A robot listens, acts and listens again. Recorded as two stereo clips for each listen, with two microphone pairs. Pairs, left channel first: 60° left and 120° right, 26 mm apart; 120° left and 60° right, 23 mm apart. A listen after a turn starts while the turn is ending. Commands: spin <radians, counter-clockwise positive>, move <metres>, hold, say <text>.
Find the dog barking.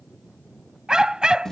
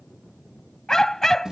spin -2.97
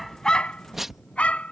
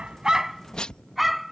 spin 0.52
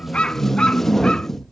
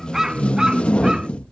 say Facing the dog barking.